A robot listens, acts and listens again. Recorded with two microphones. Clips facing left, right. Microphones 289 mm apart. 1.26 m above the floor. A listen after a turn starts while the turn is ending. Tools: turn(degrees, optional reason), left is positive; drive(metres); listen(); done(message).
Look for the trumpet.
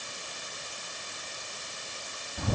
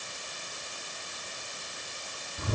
listen()
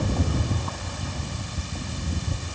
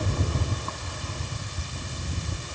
listen()
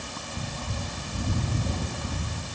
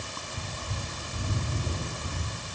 done("I can't make out a trumpet to turn to.")